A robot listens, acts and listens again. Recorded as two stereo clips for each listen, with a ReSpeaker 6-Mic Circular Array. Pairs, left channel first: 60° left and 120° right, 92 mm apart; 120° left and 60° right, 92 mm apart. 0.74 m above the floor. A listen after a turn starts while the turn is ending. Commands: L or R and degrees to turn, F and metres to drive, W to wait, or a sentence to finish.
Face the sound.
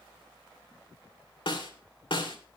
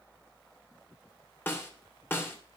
L55
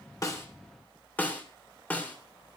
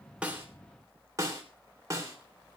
R10
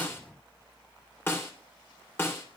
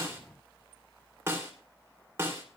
Facing the snare drum, 2 to 4 m away.